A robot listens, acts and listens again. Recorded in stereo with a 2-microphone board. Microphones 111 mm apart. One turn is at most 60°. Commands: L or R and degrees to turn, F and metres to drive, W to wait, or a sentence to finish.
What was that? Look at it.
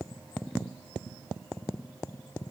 W
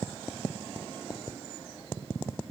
W
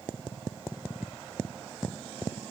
I can't make out anything.